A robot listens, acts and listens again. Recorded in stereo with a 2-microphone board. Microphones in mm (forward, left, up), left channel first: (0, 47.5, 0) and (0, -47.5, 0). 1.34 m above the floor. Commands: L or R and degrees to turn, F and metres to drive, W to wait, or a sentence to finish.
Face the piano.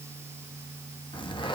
W
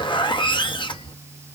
W
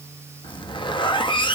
I can't make out a piano, only a zipper.